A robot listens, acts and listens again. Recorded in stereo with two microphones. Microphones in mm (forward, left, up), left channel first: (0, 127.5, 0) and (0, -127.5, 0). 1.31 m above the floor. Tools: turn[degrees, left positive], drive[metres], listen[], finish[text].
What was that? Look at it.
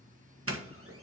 Thought: The doorbell: about 60° right or 120° right.
Action: turn[-60]
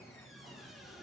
Action: listen[]
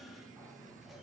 Action: listen[]
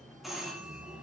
Action: finish[Found it: a doorbell, straight ahead, 1 to 2 m away.]